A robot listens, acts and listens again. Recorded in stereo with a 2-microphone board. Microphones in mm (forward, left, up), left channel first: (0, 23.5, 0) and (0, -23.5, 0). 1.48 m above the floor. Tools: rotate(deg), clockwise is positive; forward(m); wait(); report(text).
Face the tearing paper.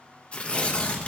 rotate(-25)
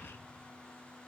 wait()
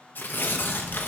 rotate(-130)
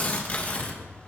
rotate(-35)
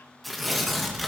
report("Facing the tearing paper, 1 to 2 m away.")